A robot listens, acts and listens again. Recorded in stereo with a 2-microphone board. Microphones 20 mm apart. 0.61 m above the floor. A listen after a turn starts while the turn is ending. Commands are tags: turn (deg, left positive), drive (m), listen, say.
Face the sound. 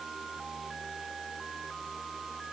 <listen/>
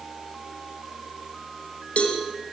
<turn deg="75"/>
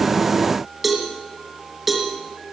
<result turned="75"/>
<say>Facing the cowbell.</say>